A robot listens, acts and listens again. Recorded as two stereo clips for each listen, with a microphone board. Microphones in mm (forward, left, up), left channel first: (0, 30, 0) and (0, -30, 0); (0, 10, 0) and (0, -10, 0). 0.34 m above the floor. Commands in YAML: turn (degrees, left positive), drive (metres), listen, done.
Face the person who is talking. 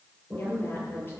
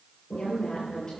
turn: 35
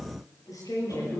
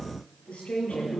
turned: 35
turn: 110
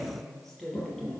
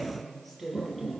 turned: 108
done: "Found it: a woman speaking, straight ahead, over 4 m away."